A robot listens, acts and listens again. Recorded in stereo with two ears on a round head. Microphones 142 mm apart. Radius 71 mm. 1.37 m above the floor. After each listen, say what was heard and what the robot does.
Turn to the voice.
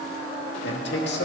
Turn 90° left.
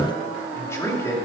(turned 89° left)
So it is at 20° left. Turn 20° left.
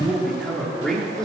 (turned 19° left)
Facing the man speaking.